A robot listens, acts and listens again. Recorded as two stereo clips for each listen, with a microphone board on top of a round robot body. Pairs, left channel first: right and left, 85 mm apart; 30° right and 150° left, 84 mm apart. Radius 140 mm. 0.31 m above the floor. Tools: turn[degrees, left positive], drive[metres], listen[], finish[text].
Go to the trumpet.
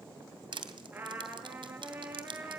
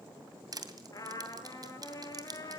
Thought: The trumpet: 20° left.
Action: turn[20]
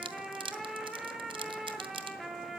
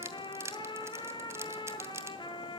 Action: drive[1.0]
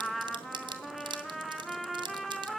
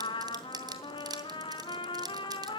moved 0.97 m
Action: drive[1.0]
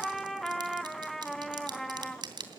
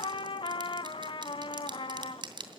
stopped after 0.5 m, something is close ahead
Action: finish[Arrived at the trumpet, straight ahead.]